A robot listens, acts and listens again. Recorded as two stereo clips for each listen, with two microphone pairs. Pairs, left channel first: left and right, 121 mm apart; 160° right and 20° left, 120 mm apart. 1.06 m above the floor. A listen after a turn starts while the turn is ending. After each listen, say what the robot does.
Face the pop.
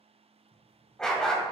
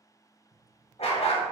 Turn 70° left.
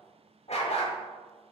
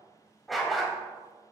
Facing where the pop came from. I can't hear it now.